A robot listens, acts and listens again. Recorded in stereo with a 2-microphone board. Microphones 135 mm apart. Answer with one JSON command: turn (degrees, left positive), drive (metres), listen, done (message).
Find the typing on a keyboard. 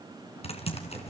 {"turn": 50}
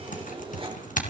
{"turn": 75}
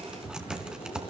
{"done": "Facing the typing on a keyboard."}